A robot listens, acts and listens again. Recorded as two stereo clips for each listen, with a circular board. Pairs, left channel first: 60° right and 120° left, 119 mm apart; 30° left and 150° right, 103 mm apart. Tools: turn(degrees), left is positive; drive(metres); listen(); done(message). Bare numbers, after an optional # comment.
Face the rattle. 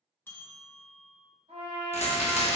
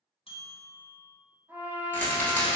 # The rattle: 45° right.
turn(-45)
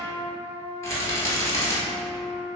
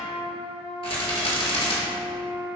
done("Facing the rattle.")